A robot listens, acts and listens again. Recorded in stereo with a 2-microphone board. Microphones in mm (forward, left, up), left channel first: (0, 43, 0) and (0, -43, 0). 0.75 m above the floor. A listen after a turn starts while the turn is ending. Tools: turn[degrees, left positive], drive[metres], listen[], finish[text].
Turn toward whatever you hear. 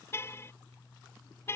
Thought: The car horn: about 30° left or 150° left.
Action: turn[30]
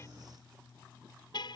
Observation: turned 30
Thought: So it is at 120° left.
Action: turn[120]
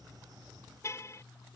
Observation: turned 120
Thought: The car horn is now 35° left.
Action: turn[35]
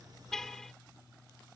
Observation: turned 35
Action: finish[Found it: a car horn, straight ahead.]